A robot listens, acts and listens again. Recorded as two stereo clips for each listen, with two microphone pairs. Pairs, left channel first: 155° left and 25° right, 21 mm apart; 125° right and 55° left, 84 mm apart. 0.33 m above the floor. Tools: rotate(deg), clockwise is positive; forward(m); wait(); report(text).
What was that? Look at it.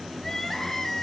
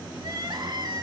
rotate(-85)
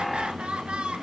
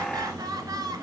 rotate(-10)
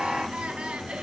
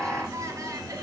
report("Found it: crying, straight ahead.")